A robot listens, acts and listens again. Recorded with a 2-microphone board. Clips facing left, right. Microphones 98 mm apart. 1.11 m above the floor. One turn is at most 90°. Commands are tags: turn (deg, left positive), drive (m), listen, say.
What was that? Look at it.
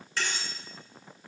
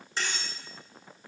<turn deg="-20"/>
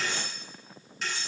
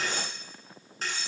<turn deg="-90"/>
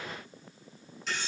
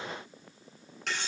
<turn deg="-75"/>
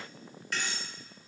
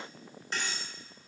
<turn deg="-30"/>
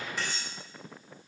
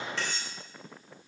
<turn deg="10"/>
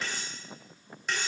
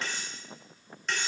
<say>Found it: cutlery clinking, straight ahead.</say>